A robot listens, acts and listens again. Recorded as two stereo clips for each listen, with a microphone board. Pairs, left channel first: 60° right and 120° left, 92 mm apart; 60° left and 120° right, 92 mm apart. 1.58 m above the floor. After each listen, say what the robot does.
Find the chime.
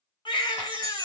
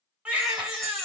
Turn 145° left.
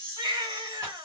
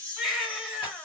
Turn 15° right.
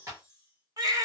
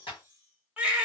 Keep listening.
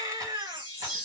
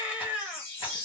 Facing the chime, 1 to 2 m away.